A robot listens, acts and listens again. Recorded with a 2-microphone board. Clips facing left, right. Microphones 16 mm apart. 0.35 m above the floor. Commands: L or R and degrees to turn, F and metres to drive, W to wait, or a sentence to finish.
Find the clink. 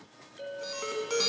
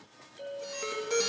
L30
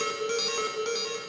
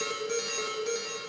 W
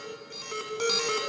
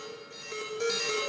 W
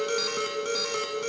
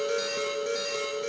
I heard a clink, but can't make it out now. It was about 20° right or 140° left.